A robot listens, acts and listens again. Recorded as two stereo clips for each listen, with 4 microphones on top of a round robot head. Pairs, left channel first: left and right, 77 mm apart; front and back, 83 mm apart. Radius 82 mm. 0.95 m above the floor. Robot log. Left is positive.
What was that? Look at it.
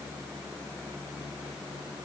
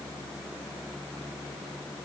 cmd idle
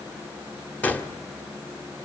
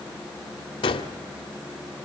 note: The gunshot: 20° left.
cmd yaw +20
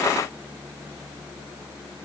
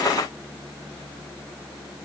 end: Facing where the gunshot came from. I can't hear it now.